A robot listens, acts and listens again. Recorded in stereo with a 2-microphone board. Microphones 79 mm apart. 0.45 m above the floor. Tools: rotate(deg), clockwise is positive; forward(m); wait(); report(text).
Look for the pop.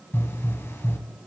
rotate(-40)
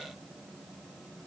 wait()
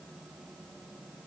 report("I heard a pop, but can't make it out now. It was about straight ahead or 100° left.")